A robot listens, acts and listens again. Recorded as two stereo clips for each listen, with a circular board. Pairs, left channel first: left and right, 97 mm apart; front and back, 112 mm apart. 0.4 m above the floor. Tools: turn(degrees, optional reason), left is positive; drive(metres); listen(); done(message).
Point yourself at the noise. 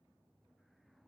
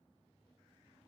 listen()
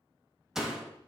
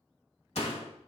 done("Facing the door slam, 1 to 2 m away.")